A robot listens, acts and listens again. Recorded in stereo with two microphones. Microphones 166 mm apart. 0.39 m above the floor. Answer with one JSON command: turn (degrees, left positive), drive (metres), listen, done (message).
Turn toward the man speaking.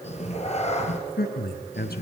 {"turn": 75}
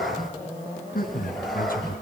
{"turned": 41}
{"turn": 65}
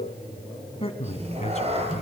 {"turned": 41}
{"turn": 45}
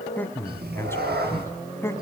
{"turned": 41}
{"turn": 15}
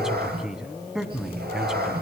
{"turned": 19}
{"done": "Facing the man speaking, 2 to 4 m away."}